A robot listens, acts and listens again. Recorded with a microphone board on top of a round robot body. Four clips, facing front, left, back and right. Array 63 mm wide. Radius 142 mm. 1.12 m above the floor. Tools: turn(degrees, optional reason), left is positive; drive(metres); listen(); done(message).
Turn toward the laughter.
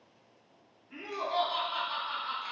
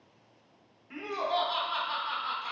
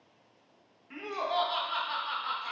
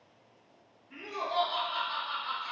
turn(degrees=155, reason="The laughter: 155° left.")
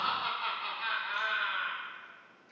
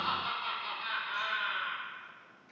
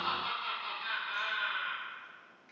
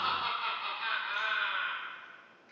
turn(degrees=-20, reason="The laughter is now 20° right.")
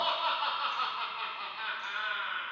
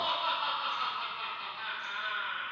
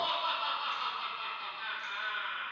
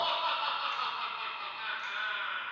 done("Facing the laughter.")